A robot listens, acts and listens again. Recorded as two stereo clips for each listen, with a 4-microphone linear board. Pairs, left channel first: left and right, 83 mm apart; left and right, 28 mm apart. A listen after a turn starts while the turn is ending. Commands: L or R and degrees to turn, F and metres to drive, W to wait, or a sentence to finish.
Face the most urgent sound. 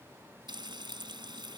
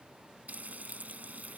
W
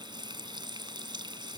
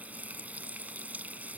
W
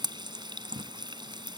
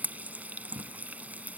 I can't make out anything urgent to turn to.